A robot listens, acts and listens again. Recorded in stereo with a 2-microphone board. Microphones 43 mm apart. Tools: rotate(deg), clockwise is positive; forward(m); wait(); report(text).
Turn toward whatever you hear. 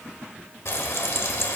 rotate(-70)
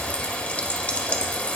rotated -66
rotate(-30)
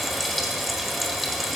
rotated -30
report("Facing the frying.")